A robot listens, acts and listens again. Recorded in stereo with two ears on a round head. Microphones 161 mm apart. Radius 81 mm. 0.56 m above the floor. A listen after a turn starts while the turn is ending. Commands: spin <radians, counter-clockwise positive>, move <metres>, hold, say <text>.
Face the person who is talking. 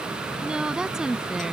spin -0.52
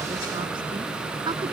hold
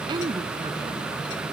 spin -2.71
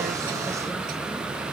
hold
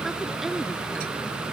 say Facing the woman speaking.